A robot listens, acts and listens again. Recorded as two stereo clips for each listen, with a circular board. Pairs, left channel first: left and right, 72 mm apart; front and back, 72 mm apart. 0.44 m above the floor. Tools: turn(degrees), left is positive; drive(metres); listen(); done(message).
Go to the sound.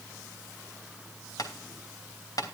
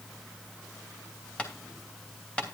turn(degrees=70)
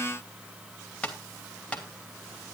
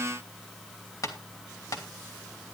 turn(degrees=20)
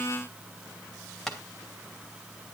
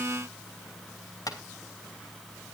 drive(metres=1.0)
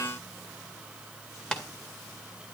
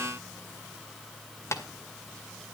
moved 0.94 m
turn(degrees=15)
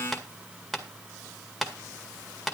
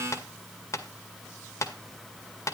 drive(metres=1.0)
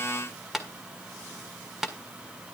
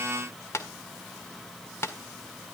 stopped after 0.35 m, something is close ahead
done("I am next to the tapping.")